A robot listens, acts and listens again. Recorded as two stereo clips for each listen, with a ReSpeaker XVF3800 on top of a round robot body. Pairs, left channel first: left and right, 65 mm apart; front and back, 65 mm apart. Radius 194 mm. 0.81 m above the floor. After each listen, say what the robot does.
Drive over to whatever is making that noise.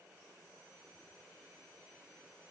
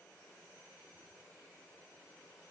Keep listening.
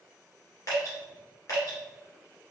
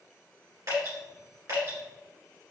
Turn 135° left.
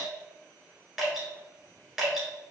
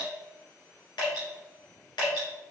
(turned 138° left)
Drive 1.0 m forward.
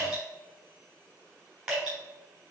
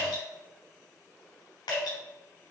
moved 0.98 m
Turn 15° right.
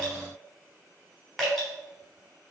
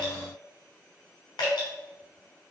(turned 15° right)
Drive 1.0 m forward.
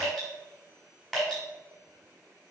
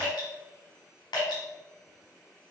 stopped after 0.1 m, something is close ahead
I am next to the dripping.